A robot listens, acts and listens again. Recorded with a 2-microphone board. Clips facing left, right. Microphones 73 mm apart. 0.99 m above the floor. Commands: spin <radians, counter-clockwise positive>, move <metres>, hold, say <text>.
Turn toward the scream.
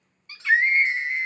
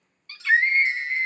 spin 0.52
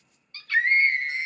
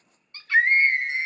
spin -0.35
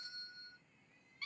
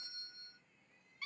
hold
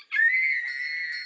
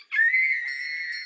say Facing the scream, 1 to 2 m away.